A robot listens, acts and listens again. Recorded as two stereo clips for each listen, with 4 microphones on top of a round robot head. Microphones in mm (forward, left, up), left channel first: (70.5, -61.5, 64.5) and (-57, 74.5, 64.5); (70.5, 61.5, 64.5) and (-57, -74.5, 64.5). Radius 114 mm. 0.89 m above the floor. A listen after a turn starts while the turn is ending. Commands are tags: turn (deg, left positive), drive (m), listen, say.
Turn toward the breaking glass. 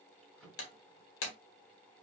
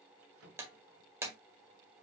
<turn deg="-55"/>
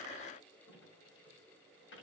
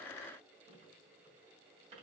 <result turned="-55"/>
<say>I heard breaking glass from this way, but can't make it out now.</say>